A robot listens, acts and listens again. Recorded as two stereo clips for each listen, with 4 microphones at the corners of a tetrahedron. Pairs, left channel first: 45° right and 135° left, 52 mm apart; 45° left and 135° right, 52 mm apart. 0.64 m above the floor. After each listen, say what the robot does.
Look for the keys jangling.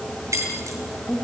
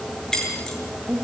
Turn 125° left.
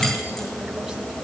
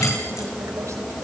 Keep listening.
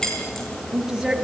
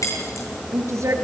Turn 35° left.
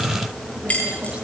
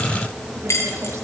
Turn 20° left.
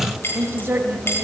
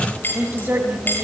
Facing the keys jangling, over 4 m away.